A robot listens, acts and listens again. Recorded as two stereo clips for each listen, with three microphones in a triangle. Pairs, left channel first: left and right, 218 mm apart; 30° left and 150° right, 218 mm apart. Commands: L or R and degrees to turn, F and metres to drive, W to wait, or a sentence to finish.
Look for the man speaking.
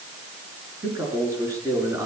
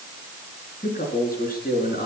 R10
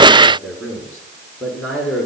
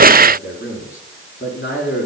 Found it: a man speaking, straight ahead.